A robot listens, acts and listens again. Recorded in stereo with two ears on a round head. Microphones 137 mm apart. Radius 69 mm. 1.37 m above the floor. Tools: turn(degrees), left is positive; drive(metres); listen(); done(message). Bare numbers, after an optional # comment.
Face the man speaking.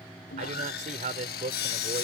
# The man speaking: about 45° right or 135° right.
turn(-45)
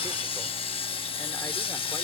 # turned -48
listen()
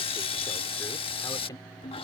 # So it is at 25° left.
turn(25)
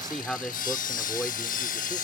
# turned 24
# The man speaking is now 10° left.
turn(10)
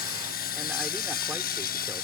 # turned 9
listen()
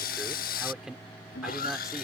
done("Facing the man speaking.")